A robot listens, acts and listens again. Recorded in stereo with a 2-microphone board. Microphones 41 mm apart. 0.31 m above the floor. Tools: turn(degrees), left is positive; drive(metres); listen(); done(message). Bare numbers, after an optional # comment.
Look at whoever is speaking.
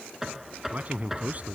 # The man speaking: about 35° right or 145° right.
turn(-35)
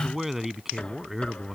done("Facing the man speaking.")